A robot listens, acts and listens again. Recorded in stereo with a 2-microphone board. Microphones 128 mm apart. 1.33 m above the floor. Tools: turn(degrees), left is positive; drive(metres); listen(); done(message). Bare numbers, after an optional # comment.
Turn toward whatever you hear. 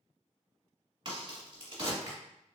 # The crack: about 40° right or 140° right.
turn(-40)
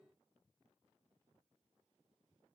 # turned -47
listen()
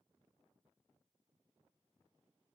done("I heard a crack, but can't make it out now. It was about 5° left or 90° right.")